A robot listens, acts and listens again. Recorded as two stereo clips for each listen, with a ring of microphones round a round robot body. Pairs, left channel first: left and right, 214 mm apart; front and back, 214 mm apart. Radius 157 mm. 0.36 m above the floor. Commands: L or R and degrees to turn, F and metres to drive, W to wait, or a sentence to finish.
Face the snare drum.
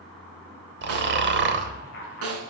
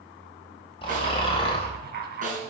R115
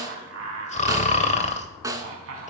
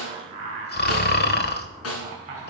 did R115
R15
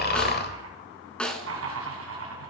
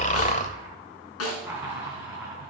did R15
Facing the snare drum, 1 to 2 m away.